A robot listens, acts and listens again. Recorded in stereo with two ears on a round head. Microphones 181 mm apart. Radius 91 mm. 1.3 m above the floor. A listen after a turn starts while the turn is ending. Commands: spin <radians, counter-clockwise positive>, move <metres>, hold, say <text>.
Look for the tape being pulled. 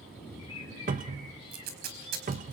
spin -0.87
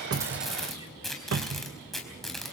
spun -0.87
say Found it: tape being pulled, straight ahead, over 4 m away.